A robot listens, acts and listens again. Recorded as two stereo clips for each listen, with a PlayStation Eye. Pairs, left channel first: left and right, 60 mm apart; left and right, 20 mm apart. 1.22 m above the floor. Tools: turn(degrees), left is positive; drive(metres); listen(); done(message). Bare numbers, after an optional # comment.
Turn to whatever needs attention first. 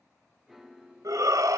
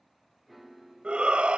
turn(-90)
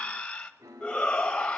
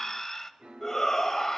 # So it is at 10° left.
turn(10)
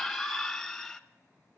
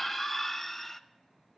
done("Facing the shout.")